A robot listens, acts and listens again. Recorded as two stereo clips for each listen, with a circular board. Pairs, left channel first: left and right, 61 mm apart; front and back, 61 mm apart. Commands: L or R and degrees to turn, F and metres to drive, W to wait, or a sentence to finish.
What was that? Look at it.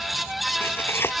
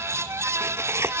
L140
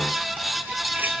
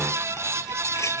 W
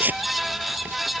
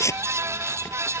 R30
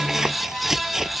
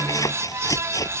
Facing the tearing paper.